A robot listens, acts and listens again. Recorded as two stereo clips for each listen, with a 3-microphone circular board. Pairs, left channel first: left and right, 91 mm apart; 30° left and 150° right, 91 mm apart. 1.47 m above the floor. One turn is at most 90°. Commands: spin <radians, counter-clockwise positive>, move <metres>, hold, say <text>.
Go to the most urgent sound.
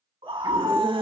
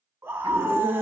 spin -1.48
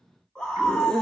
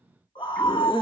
move 1.0
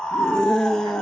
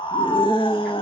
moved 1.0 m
move 1.0
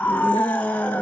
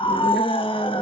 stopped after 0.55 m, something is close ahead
spin 0.26
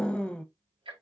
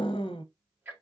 spin 0.17
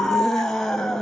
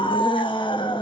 say Arrived at the scream, straight ahead.